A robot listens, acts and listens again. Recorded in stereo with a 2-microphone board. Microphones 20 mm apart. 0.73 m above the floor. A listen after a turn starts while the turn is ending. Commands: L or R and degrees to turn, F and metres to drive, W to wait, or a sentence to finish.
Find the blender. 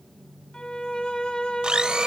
R45
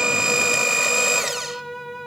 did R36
R15
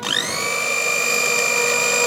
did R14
Found it: a blender, straight ahead.